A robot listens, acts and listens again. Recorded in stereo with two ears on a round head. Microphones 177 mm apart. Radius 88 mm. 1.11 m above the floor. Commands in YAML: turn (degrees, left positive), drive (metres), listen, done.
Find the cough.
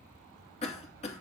turn: 35
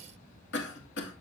turn: 110
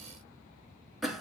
done: "Facing the cough, 2 to 4 m away."